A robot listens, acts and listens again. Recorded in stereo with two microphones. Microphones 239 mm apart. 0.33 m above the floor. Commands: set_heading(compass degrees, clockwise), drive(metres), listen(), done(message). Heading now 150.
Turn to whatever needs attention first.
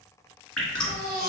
set_heading(190)
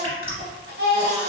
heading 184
set_heading(279)
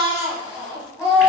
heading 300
set_heading(280)
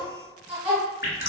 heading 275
done("Found it: a baby crying, straight ahead.")